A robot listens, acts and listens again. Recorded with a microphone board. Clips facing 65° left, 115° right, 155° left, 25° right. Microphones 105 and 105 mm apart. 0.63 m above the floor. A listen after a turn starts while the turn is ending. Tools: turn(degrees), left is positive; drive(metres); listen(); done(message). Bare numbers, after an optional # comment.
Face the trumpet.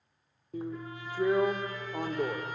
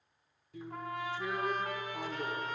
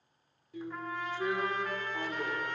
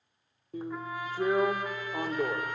# The trumpet: 105° right.
turn(-105)
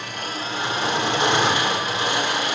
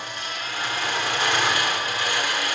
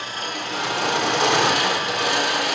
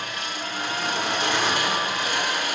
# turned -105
listen()
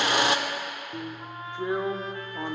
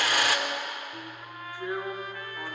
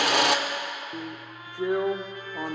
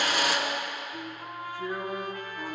done("Facing the trumpet, 1 to 2 m away.")